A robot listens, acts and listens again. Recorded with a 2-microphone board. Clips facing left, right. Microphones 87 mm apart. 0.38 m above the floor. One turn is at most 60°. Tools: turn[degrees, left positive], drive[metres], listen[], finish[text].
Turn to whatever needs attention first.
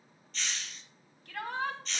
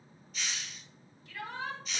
Thought: The shout: about 65° left or 115° left.
Action: turn[60]
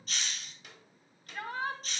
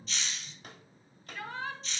Thought: So it is at 50° left.
Action: turn[50]
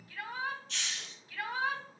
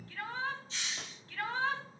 Thought: The shout is now 10° left.
Action: turn[10]
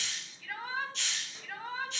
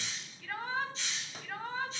Action: finish[Found it: a shout, straight ahead, 2 to 4 m away.]